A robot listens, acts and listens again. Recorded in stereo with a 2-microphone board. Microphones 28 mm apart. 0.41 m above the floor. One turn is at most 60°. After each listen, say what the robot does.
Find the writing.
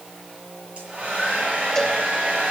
Keep listening.
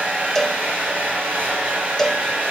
Keep listening.
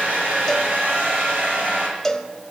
I can't make out writing to turn to.